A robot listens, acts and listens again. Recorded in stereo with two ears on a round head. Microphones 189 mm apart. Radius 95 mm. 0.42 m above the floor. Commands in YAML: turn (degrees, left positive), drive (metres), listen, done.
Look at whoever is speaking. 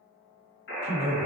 turn: 30
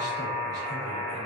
listen: true
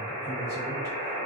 listen: true
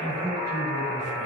turn: -15
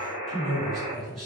done: "Facing the man speaking, 1 to 2 m away."